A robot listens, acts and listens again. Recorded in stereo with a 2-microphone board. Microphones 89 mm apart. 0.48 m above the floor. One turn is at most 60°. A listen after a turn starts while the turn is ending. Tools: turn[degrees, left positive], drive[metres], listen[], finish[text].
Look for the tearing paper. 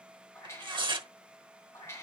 Thought: The tearing paper: about 60° right or 120° right.
Action: turn[-60]
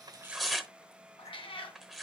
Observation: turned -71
Action: finish[Found it: tearing paper, straight ahead.]